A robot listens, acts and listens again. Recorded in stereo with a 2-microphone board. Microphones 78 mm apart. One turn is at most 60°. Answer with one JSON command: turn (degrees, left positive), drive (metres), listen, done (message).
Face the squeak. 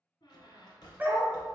{"turn": 60}
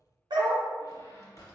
{"turn": 50}
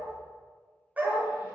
{"listen": true}
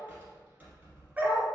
{"turn": -25}
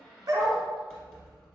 {"done": "Found it: a squeak, straight ahead, 1 to 2 m away."}